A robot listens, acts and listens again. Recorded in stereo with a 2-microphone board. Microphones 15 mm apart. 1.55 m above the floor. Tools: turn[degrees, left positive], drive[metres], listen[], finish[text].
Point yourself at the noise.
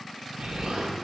Thought: The explosion: about 70° right or 110° right.
Action: turn[-70]
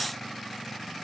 Action: listen[]
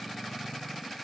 Action: finish[I heard an explosion, but can't make it out now. It was about straight ahead or 40° right.]